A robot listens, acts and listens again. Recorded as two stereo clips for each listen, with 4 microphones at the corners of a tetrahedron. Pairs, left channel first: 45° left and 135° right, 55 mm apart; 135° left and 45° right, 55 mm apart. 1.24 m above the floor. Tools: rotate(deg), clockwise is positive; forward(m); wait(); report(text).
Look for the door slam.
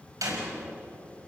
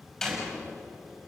rotate(145)
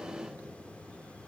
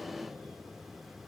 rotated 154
rotate(-10)
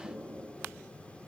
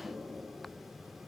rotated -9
report("Facing where the door slam came from. I can't hear it now.")